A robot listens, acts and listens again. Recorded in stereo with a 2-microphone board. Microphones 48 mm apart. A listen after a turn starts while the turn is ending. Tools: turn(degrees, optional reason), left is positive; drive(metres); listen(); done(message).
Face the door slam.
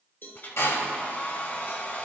turn(degrees=90)
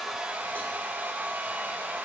done("I heard a door slam from this way, but can't make it out now.")